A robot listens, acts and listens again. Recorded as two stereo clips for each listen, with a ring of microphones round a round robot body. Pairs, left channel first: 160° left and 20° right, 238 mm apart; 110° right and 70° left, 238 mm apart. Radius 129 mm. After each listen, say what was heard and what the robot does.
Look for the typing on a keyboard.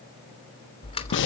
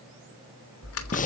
The typing on a keyboard: 135° right. Turn 135° right.
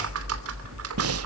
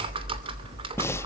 Facing the typing on a keyboard, 2 to 4 m away.